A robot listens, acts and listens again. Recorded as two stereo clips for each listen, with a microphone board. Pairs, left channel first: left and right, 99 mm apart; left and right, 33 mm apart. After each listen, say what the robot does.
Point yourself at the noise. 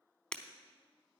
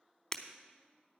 Turn 30° left.
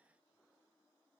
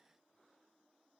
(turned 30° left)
Keep listening.
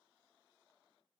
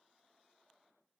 I heard breaking glass, but can't make it out now. It was about 20° right or 140° left.